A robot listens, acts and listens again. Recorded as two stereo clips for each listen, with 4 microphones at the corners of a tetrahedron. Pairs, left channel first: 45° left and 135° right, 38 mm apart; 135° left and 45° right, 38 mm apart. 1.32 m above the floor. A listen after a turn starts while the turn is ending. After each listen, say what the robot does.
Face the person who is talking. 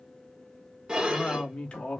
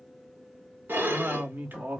Turn 15° right.
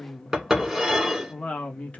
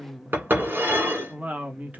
Found it: a woman speaking, straight ahead.